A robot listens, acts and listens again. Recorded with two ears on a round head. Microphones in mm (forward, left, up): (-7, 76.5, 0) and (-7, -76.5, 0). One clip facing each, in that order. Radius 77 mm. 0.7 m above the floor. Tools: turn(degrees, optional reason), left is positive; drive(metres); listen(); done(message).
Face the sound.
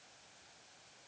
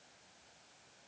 listen()
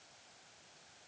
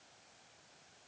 listen()
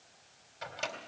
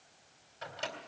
turn(degrees=30)
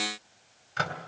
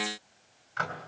turn(degrees=140, reason="So it is at 140° left.")
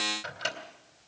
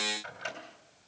turn(degrees=45, reason="The microwave is now 45° left.")
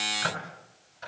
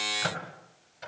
turn(degrees=-25, reason="The microwave is now 25° right.")
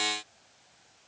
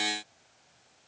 listen()
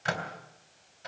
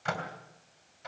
done("Facing the microwave, 2 to 4 m away.")